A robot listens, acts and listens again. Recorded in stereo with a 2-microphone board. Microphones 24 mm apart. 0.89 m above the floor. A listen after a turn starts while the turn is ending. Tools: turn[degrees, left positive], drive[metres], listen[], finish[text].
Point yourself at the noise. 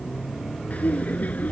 Action: turn[90]
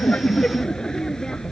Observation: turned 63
Thought: So it is at 30° left.
Action: turn[30]
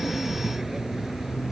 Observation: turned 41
Thought: Nothing new. It was at 10° right.
Action: turn[-10]
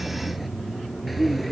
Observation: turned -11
Action: finish[Facing the laughter.]